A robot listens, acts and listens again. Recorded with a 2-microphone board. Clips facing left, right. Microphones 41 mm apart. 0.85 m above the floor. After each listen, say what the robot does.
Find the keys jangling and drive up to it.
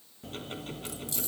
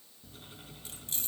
Turn 45° right.
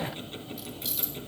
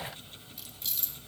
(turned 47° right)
Drive 1.0 m forward.
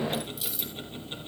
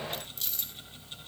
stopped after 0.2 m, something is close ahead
Blocked. The keys jangling is further on, straight ahead.